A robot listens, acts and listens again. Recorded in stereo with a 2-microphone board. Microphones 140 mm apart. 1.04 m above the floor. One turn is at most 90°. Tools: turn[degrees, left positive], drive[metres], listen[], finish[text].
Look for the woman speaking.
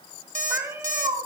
Action: listen[]
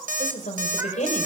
Thought: The woman speaking: about 60° left or 120° left.
Action: turn[60]
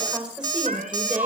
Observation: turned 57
Thought: So it is at 15° right.
Action: turn[-15]
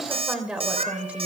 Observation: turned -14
Thought: The woman speaking is now 10° right.
Action: turn[-10]
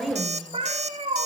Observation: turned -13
Action: finish[Facing the woman speaking.]